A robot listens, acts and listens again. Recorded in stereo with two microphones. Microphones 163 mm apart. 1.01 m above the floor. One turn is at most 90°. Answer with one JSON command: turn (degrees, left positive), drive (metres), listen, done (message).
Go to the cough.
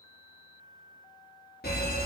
{"listen": true}
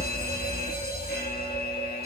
{"listen": true}
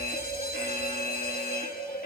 {"done": "I can't make out a cough, only an alarm."}